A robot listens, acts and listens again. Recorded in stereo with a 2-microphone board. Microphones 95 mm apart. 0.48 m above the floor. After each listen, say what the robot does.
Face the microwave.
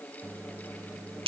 Turn 20° right.
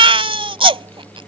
Turn 135° right.
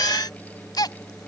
Turn 15° right.
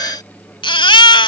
Facing the microwave.